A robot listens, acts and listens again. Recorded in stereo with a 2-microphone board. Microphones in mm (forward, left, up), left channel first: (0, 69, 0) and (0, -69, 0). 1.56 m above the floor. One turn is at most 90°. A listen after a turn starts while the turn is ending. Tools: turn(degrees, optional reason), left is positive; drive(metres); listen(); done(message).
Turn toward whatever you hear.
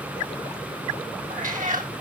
turn(degrees=-70, reason="The cat meowing: about 70° right or 110° right.")
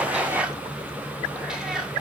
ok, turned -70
done("Facing the cat meowing, 2 to 4 m away.")